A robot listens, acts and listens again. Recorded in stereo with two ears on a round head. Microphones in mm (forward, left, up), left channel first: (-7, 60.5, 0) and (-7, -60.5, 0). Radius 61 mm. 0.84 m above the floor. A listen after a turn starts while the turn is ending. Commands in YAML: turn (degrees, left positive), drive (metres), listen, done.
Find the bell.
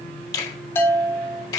turn: 30
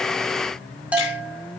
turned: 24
turn: -10
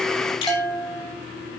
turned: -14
done: "Found it: a bell, straight ahead, 1 to 2 m away."